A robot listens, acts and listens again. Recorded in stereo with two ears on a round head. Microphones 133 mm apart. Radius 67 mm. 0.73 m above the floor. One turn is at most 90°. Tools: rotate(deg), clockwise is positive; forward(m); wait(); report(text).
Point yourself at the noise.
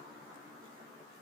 wait()
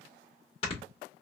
rotate(-45)
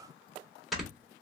report("Found it: snoring, straight ahead, 1 to 2 m away.")